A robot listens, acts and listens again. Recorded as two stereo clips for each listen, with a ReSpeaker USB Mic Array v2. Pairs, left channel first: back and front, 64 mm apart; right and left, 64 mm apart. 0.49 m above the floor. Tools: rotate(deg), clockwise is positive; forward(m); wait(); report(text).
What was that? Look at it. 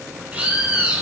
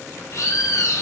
rotate(65)
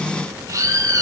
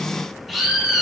report("Found it: a bird, straight ahead, over 4 m away.")